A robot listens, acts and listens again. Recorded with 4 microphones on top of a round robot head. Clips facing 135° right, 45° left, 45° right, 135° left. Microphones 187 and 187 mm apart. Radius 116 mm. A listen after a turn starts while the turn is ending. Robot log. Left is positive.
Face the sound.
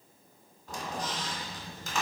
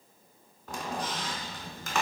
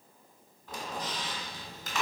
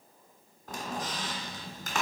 note: The squeak: 90° left.
cmd yaw +90
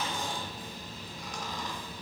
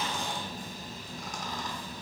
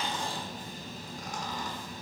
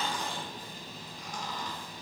end: Found it: a squeak, straight ahead, 1 to 2 m away.